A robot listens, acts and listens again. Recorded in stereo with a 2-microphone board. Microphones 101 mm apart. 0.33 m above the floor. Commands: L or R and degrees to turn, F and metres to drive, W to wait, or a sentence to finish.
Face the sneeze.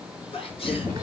L70
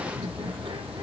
W
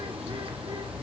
I heard a sneeze, but can't make it out now. It was about straight ahead or 40° left.